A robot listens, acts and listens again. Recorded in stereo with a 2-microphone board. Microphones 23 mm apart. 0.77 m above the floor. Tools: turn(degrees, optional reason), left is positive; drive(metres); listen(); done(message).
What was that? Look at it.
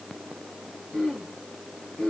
turn(degrees=90)
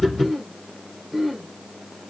done("Facing the throat clearing, over 4 m away.")